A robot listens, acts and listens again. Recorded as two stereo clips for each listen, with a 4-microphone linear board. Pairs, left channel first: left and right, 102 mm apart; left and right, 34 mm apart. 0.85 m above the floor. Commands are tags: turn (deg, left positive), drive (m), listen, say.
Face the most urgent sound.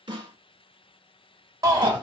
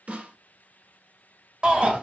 <turn deg="-35"/>
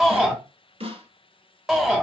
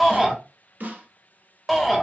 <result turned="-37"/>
<say>Facing the shout.</say>